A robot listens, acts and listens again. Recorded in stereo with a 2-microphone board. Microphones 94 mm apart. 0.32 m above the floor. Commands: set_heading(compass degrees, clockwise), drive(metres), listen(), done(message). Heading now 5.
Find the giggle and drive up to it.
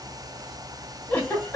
set_heading(345)
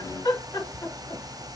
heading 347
set_heading(202)
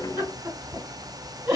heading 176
set_heading(206)
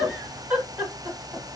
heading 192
set_heading(207)
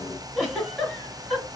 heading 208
drive(1.0)
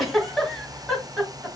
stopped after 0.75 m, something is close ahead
done("Arrived at the giggle, straight ahead.")